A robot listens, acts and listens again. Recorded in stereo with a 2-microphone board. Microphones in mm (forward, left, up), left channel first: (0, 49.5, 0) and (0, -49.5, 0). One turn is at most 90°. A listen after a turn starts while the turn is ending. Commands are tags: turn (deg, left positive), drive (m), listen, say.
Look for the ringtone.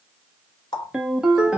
<turn deg="-30"/>
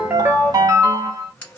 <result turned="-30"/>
<turn deg="-90"/>
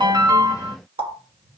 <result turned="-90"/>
<turn deg="-20"/>
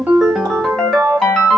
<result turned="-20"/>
<say>Found it: a ringtone, straight ahead, under 1 m away.</say>